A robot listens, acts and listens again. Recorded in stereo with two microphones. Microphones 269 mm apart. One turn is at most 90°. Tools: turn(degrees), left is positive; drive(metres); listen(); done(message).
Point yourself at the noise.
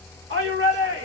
turn(degrees=-50)
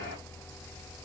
listen()
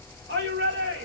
turn(degrees=-65)
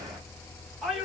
done("Facing the shout, 1 to 2 m away.")